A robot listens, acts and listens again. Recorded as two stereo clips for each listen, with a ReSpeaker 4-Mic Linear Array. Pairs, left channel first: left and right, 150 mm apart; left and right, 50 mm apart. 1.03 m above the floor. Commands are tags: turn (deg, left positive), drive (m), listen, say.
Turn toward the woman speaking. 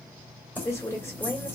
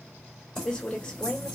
<turn deg="20"/>
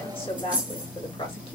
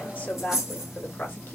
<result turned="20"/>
<turn deg="140"/>
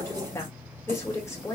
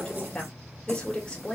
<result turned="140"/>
<turn deg="20"/>
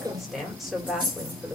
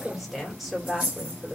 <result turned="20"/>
<say>Facing the woman speaking.</say>